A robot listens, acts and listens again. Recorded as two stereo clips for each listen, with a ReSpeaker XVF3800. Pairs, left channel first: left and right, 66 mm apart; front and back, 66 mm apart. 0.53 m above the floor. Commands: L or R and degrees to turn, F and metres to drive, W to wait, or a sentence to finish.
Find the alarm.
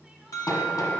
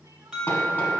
L100
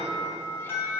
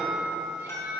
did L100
L40
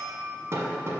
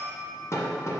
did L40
Found it: an alarm, straight ahead.